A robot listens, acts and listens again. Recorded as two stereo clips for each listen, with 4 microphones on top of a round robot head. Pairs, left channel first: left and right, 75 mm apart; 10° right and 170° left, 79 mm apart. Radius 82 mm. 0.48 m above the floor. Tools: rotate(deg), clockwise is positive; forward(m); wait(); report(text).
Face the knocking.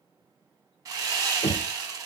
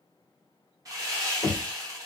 rotate(-25)
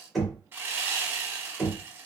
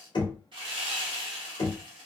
report("Facing the knocking.")